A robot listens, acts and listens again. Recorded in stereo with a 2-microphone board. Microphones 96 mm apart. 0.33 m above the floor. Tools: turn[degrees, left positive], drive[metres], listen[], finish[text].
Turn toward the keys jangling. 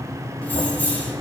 Thought: The keys jangling: about 15° left or 165° left.
Action: turn[15]
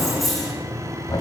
Action: finish[Facing the keys jangling.]